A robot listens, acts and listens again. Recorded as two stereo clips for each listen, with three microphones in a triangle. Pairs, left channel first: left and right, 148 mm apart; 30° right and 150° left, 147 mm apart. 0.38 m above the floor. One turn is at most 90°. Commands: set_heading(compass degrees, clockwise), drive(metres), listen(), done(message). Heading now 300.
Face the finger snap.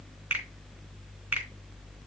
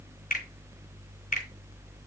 set_heading(310)
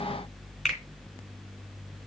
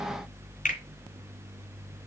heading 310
done("Facing the finger snap.")